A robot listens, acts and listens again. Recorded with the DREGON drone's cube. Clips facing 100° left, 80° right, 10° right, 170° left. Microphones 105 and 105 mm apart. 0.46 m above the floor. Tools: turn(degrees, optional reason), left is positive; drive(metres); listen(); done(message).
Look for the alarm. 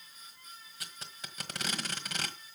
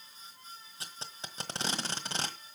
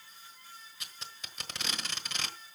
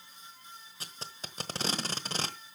listen()
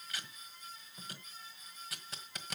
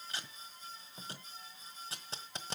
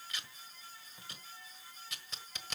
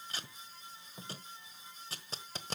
listen()
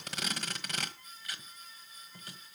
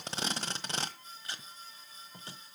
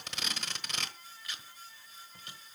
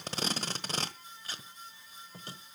done("I can't make out an alarm to turn to.")